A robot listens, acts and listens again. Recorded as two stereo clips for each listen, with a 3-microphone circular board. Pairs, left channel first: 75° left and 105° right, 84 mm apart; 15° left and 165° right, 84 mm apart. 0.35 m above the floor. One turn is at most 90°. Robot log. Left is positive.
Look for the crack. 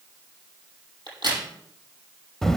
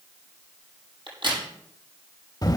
note: The crack: 140° right.
cmd yaw -90
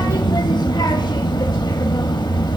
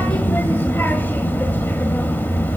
note: Nothing new. It was at 50° right.
cmd yaw -50
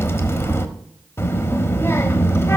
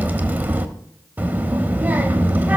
end: Facing where the crack came from. I can't hear it now.